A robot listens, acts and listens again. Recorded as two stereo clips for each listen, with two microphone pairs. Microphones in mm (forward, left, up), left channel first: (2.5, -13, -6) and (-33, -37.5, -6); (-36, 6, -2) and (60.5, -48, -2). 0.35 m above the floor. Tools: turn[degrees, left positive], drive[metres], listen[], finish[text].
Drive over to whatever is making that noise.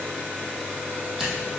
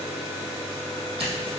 Thought: The scissors: 65° right.
Action: turn[-65]
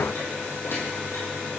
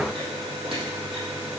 Action: listen[]
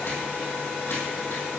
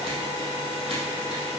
Action: listen[]
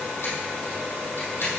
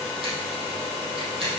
Action: finish[Facing where the scissors came from. I can't hear it now. I did not reach it.]